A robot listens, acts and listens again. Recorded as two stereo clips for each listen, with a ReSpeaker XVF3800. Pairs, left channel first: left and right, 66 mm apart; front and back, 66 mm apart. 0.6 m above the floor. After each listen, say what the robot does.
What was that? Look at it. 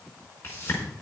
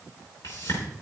Turn 30° left.
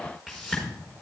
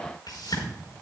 Facing the whoosh.